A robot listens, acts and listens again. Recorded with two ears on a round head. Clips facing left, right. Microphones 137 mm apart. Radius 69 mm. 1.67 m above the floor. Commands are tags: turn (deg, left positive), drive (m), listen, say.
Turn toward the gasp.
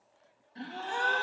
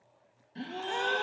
<turn deg="-25"/>
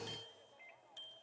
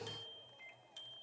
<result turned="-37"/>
<listen/>
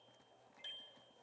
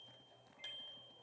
<say>I heard a gasp, but can't make it out now. It was about 10° left or 115° right.</say>